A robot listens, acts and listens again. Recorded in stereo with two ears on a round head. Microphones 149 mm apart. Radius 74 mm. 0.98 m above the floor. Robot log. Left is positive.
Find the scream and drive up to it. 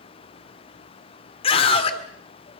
note: The scream: about 35° left or 145° left.
cmd yaw +35
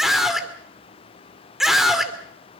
cmd fwd 1.0
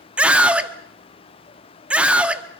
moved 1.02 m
note: The scream is now 10° right.
cmd yaw -10
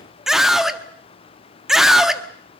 cmd fwd 1.0
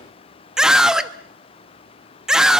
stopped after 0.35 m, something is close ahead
end: I am next to the scream.